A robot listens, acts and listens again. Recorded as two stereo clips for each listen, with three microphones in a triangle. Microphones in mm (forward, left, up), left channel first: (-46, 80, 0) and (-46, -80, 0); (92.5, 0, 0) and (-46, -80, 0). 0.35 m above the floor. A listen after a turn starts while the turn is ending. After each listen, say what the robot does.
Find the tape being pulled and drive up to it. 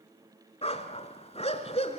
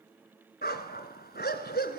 Keep listening.
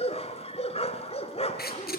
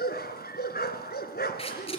Turn 80° left.
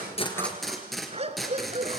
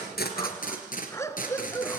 Drive 1.0 m forward.
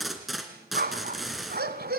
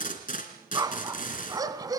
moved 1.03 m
Drive 1.0 m forward.
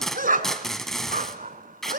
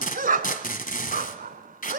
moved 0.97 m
Drive 1.0 m forward.
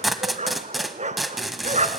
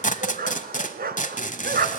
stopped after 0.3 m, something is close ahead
I am next to the tape being pulled.